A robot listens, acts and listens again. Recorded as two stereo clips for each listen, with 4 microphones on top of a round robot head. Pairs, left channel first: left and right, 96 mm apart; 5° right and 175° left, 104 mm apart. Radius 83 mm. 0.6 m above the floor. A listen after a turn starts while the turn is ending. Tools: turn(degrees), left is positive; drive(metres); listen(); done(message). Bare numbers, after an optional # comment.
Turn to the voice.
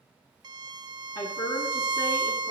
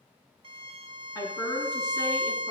# The woman speaking: 45° left.
turn(45)
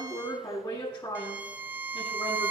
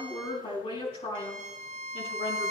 # The woman speaking is now 15° left.
turn(15)
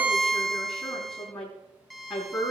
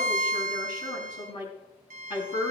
done("Found it: a woman speaking, straight ahead, over 4 m away.")